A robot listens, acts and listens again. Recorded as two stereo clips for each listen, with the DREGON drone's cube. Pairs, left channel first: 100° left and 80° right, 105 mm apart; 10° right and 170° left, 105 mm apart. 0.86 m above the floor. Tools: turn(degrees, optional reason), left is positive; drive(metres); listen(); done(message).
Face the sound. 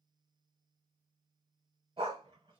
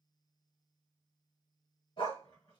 turn(degrees=-40, reason="The dog barking: 40° right.")
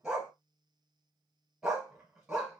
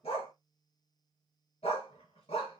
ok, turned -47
done("Found it: a dog barking, straight ahead, 1 to 2 m away.")